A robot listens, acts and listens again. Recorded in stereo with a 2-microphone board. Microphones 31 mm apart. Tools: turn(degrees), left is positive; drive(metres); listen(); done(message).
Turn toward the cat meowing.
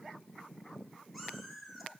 turn(degrees=-30)
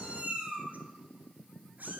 turn(degrees=-110)
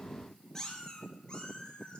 turn(degrees=30)
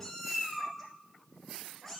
done("Found it: a cat meowing, straight ahead, 1 to 2 m away.")